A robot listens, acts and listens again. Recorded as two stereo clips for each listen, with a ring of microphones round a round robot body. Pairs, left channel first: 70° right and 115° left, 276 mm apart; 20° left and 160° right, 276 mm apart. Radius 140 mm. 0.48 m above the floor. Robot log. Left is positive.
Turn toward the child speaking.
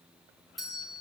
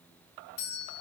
cmd idle
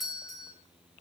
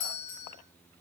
cmd idle
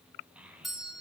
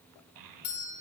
note: The child speaking: 160° right.
cmd yaw -160
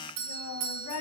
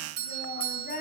note: The child speaking is now 35° right.
cmd yaw -35
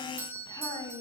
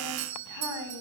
note: The child speaking is now 10° left.
cmd yaw +10
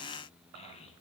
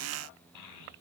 end: Found it: a child speaking, straight ahead.